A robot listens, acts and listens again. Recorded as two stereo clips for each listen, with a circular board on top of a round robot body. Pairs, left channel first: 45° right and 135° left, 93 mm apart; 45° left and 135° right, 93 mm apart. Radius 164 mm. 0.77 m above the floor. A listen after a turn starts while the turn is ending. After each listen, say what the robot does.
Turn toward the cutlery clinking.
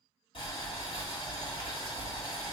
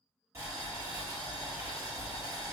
Keep listening.
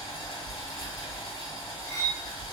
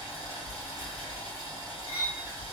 Facing the cutlery clinking.